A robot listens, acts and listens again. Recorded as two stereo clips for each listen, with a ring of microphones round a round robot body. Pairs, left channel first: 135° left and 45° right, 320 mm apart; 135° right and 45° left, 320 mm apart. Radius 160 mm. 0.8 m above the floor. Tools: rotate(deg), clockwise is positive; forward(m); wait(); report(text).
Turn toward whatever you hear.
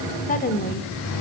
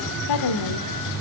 rotate(160)
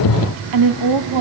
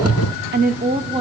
rotate(30)
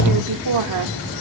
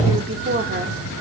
rotate(15)
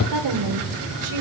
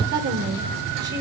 rotate(15)
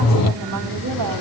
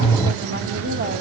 report("Found it: a woman speaking, straight ahead, 2 to 4 m away.")